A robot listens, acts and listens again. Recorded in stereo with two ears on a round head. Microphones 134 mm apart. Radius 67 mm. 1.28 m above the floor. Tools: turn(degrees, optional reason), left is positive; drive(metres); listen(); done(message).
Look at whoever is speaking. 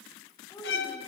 turn(degrees=20, reason="The child speaking: about 20° left or 160° left.")
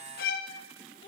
turn(degrees=145, reason="So it is at 145° left.")
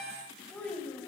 done("Facing the child speaking, over 4 m away.")